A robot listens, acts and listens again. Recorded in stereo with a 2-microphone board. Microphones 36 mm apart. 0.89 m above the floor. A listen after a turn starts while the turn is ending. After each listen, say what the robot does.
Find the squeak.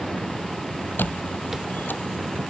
Turn 60° left.
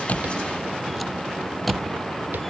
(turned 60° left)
Found it: a squeak, straight ahead.